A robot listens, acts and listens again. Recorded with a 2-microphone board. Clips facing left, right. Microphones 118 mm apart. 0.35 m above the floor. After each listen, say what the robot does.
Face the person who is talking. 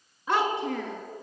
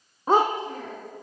Turn 90° left.
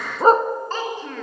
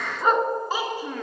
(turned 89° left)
Turn 15° right.
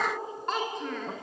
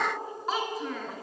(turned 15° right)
Facing the child speaking, 2 to 4 m away.